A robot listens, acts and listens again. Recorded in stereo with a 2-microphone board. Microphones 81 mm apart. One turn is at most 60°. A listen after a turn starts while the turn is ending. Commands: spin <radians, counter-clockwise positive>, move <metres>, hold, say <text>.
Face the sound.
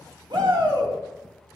spin -1.05
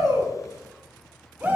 spin -0.44
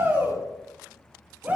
spin -0.35
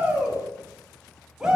spin -0.17
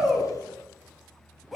say Facing the shout, 2 to 4 m away.